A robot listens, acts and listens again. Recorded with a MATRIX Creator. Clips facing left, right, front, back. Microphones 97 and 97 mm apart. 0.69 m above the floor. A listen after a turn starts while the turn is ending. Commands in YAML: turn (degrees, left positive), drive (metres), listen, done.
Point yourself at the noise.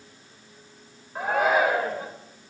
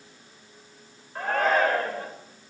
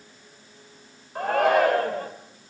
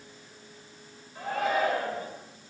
turn: 10
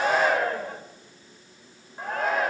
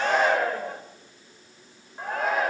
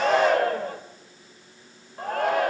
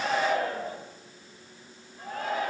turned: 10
done: "Facing the shout."